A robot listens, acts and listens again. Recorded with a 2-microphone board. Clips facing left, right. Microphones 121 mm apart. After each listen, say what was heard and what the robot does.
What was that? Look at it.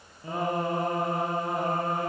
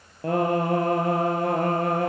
Turn 90° right.
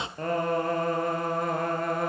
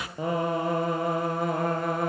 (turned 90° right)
Facing the singing, 2 to 4 m away.